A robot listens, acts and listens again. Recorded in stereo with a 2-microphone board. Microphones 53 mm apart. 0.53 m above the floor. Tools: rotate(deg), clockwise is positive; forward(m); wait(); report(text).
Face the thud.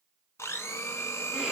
wait()
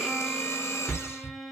rotate(-35)
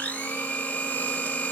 wait()
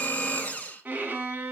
report("I heard a thud, but can't make it out now. It was about straight ahead or 110° left.")